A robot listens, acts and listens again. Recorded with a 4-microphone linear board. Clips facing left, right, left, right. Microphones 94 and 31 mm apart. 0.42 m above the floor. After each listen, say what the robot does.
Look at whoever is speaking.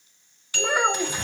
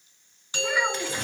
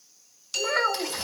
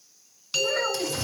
Turn 50° left.
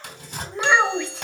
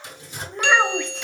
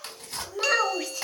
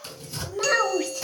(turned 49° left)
Found it: a child speaking, straight ahead.